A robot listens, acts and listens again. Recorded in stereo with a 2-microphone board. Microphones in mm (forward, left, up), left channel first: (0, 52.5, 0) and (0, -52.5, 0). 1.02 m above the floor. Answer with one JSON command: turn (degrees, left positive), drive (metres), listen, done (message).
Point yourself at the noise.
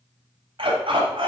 {"turn": -55}
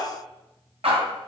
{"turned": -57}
{"turn": -75}
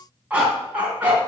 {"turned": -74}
{"turn": -15}
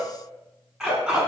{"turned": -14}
{"done": "Facing the dog barking."}